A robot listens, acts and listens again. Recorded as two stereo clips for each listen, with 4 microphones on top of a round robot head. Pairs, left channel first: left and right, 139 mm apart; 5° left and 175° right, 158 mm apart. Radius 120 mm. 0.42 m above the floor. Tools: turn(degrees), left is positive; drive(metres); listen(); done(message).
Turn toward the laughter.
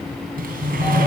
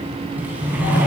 listen()
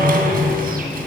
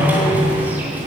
listen()
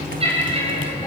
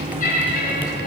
turn(degrees=-45)
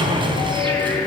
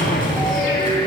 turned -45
listen()
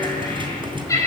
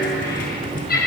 turn(degrees=25)
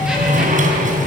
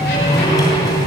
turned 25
listen()
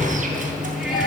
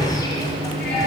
listen()
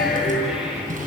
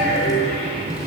done("Facing where the laughter came from. I can't hear it now.")